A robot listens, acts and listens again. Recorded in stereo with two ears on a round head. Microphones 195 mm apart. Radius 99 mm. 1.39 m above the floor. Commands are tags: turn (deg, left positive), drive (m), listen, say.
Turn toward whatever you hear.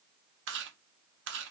<turn deg="-55"/>
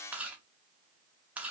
<say>Found it: chewing, straight ahead.</say>